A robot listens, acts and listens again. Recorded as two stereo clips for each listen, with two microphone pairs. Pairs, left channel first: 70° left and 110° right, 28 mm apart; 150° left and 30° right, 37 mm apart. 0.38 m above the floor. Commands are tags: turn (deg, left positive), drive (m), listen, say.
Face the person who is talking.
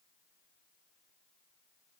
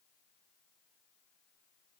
<listen/>
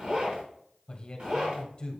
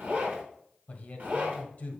<turn deg="115"/>
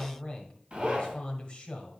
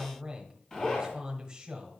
<turn deg="30"/>
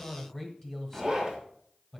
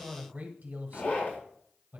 <say>Found it: a man speaking, straight ahead.</say>